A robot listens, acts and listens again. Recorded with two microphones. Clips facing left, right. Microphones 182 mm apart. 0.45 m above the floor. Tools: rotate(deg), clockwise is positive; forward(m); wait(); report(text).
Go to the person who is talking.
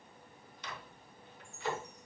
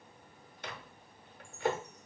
wait()
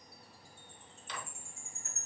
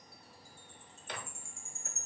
wait()
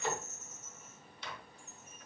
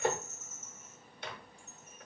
report("I can't make out anyone speaking, only a microwave and a chime.")